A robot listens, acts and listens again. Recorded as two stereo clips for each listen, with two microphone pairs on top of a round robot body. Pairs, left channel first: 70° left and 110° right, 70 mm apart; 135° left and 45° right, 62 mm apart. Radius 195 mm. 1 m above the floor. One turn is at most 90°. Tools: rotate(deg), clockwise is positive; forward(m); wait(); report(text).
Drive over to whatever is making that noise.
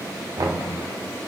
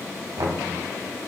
rotate(80)
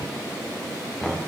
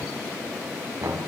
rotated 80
rotate(15)
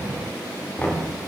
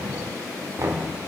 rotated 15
forward(1.0)
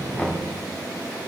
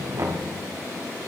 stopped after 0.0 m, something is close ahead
report("Something is in my way. I am facing the knocking but have not reached it.")